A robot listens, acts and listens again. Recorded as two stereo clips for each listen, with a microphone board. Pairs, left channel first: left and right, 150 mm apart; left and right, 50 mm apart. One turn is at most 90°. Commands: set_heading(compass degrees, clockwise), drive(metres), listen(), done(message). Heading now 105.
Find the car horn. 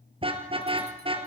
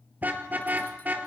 set_heading(140)
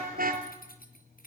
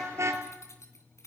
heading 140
set_heading(230)
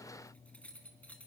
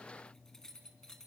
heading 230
set_heading(250)
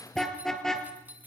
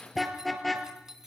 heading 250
done("Facing the car horn.")